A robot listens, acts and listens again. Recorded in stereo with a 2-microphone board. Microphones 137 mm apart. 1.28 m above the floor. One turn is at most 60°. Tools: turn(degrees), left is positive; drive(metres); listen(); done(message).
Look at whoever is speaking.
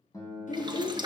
turn(degrees=60)
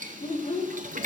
turn(degrees=55)
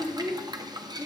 done("Facing the child speaking.")